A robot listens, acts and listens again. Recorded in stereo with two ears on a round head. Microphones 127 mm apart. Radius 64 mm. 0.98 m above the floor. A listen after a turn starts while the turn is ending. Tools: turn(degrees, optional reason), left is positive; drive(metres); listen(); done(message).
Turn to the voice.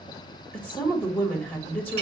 turn(degrees=30)
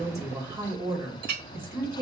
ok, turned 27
turn(degrees=-20, reason="So it is at 20° right.")
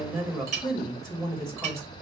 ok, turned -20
done("Found it: a woman speaking, straight ahead, 2 to 4 m away.")